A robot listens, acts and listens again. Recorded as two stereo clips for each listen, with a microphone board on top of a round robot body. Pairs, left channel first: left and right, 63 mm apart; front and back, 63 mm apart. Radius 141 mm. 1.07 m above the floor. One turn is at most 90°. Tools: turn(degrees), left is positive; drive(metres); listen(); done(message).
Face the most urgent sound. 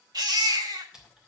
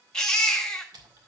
turn(degrees=-80)
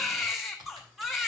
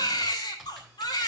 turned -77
done("Found it: a baby crying, straight ahead.")